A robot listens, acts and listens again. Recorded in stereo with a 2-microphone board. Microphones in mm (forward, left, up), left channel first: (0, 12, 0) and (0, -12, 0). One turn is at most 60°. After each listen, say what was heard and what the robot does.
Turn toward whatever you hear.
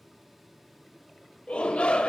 The shout: about 55° left or 125° left. Turn 55° left.
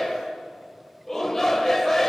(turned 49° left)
So it is at 20° left. Turn 20° left.
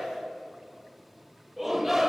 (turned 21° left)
Facing the shout.